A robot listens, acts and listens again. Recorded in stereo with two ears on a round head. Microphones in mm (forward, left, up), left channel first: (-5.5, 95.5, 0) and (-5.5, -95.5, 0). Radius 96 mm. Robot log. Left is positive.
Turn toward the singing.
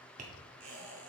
cmd idle
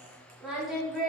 cmd yaw +30
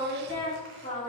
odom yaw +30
note: So it is at 145° left.
cmd yaw +145
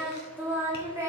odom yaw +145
note: The singing is now 15° right.
cmd yaw -15
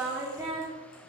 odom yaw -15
note: The singing is now 15° right.
cmd yaw -15
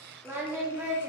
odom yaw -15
note: The singing is now 10° right.
cmd yaw -10
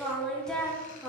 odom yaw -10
end: Found it: singing, straight ahead.